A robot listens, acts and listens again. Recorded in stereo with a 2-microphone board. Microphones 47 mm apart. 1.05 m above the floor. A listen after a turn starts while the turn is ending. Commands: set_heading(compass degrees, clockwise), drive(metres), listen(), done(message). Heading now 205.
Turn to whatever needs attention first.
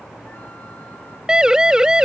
set_heading(220)
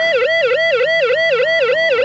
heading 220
done("Found it: a siren, straight ahead.")